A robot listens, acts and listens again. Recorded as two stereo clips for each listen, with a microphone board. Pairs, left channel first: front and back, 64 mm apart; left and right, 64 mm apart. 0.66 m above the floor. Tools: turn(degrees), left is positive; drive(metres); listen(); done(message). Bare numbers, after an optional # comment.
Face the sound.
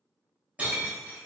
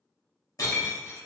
# The breaking glass: 110° left.
turn(110)
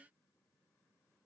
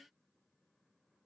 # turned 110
done("I heard breaking glass from this way, but can't make it out now.")